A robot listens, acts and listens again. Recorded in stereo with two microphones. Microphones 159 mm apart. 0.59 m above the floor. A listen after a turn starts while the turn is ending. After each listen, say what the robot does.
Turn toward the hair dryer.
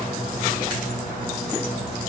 Keep listening.
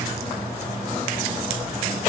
Keep listening.
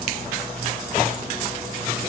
I can't make out a hair dryer.